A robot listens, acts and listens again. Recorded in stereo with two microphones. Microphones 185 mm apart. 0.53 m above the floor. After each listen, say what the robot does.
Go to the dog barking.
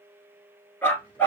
Turn 30° left.
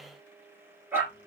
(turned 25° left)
Turn 10° right.
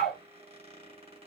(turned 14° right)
Drive 1.0 m forward.
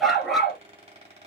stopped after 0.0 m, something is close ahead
Blocked. The dog barking is further on, straight ahead.